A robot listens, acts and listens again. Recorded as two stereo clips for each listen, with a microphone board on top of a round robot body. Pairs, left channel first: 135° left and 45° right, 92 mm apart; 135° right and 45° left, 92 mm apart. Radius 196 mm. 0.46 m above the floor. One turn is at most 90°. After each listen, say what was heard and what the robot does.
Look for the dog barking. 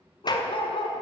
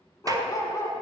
The dog barking: 165° left. Turn 90° left.
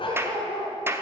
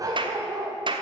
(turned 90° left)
The dog barking is now 105° left. Turn 90° left.
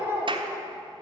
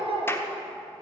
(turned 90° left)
The dog barking is now 20° left. Turn 20° left.
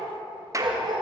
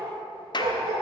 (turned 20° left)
Found it: a dog barking, straight ahead, 2 to 4 m away.